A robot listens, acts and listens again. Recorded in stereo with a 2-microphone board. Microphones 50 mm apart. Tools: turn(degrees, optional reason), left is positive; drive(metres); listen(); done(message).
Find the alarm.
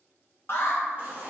turn(degrees=55, reason="The alarm: about 55° left or 125° left.")
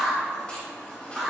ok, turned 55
done("Facing the alarm.")